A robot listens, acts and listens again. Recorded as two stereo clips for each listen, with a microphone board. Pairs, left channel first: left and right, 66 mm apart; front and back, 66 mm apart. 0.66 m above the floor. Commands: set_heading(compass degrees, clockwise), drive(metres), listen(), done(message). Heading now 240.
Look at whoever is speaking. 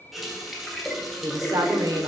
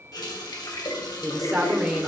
set_heading(335)
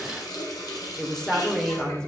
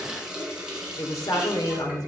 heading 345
set_heading(335)
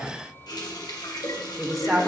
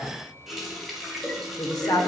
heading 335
done("Found it: a woman speaking, straight ahead, 1 to 2 m away.")